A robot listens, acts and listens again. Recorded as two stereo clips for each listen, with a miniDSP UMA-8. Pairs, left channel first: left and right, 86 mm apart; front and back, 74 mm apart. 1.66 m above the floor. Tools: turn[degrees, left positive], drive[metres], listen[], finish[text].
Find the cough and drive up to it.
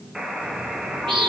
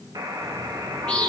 Action: listen[]
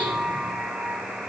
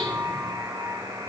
Action: listen[]
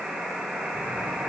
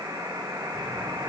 Action: finish[I can't make out a cough, only a bird and a buzzer.]